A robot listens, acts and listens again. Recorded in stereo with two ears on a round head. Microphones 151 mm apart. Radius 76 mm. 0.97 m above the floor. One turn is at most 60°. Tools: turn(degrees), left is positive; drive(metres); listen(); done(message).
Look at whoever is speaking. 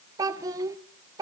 turn(degrees=-20)
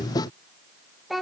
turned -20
done("Found it: a child speaking, straight ahead.")